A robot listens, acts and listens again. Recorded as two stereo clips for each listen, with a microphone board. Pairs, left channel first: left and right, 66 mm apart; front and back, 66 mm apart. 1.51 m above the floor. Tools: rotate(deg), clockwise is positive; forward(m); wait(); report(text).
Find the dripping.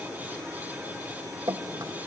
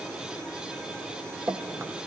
rotate(125)
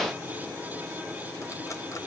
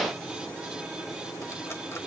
wait()
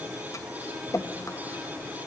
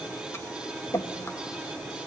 rotate(-45)
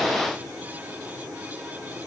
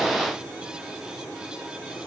wait()
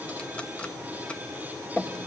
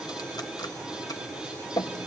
rotate(-15)
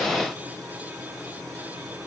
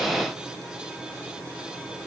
wait()
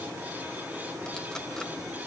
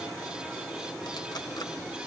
wait()
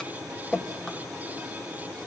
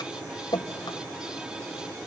rotate(-10)
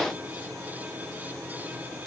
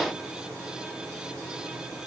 wait()
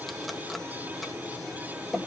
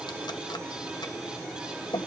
report("Found it: dripping, straight ahead, 1 to 2 m away.")